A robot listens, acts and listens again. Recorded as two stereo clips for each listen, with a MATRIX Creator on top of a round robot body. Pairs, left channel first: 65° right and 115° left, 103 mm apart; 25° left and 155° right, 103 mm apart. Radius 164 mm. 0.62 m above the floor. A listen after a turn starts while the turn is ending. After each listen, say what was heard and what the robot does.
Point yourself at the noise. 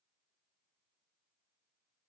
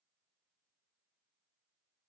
Keep listening.
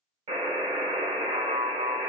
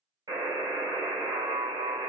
The buzzer: 150° left. Turn 150° left.
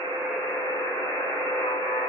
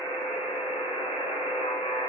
Found it: a buzzer, straight ahead.